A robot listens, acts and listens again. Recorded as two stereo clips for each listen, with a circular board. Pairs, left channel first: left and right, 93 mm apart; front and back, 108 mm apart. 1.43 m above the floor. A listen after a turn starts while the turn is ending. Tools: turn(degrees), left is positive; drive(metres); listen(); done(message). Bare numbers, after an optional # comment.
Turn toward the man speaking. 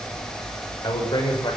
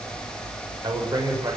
# The man speaking: 125° left.
turn(125)
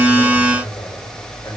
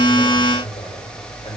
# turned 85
# The man speaking is now 30° left.
turn(30)
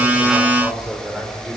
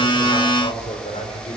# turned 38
# The man speaking is now 10° right.
turn(-10)
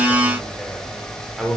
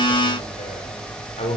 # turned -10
done("Found it: a man speaking, straight ahead.")